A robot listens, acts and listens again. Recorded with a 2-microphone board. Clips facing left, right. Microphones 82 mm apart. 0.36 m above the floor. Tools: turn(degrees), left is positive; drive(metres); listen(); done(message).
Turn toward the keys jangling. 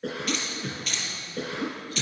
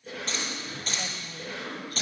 turn(degrees=-40)
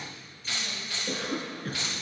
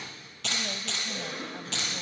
turn(degrees=-95)
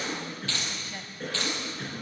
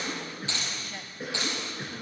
turn(degrees=-15)
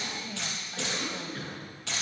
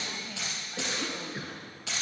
done("Found it: keys jangling, straight ahead, over 4 m away.")